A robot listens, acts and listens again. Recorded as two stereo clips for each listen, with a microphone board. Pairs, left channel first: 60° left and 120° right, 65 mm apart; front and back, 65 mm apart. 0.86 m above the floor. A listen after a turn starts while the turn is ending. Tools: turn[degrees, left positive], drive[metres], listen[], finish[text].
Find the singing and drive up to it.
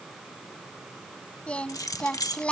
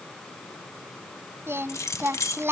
Thought: The singing: 130° left.
Action: turn[130]
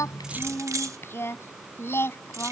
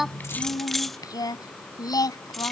Action: drive[1.0]
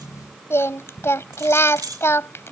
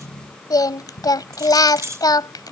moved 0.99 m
Thought: The singing is now 10° left.
Action: turn[10]
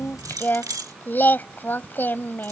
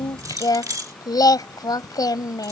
Action: drive[1.0]
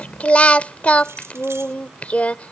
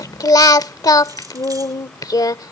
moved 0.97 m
Thought: The singing is now 10° right.
Action: turn[-10]
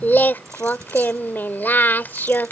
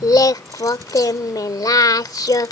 Action: drive[1.0]
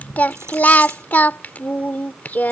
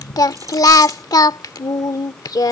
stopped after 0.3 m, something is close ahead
Action: finish[I am next to the singing.]